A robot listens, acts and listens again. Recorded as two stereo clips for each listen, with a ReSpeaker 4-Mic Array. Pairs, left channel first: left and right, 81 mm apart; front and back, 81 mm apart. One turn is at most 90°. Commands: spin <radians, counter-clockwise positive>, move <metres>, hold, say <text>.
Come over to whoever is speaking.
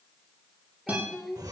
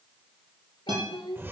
move 1.0
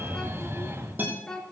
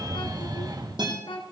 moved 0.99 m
move 1.0
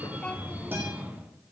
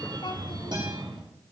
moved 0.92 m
spin 0.26
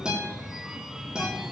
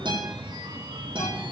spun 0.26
hold
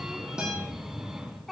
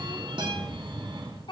move 1.0
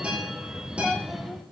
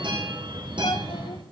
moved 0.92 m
hold
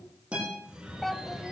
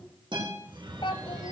move 1.0
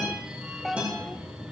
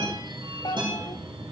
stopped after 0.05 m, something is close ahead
say Arrived at the child speaking, straight ahead.